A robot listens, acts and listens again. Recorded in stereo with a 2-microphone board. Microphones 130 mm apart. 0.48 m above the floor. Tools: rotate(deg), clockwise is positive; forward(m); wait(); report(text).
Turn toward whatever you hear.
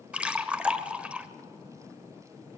rotate(30)
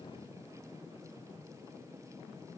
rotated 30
wait()
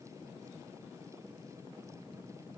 report("I heard a splash, but can't make it out now. It was about 20° left or 140° right.")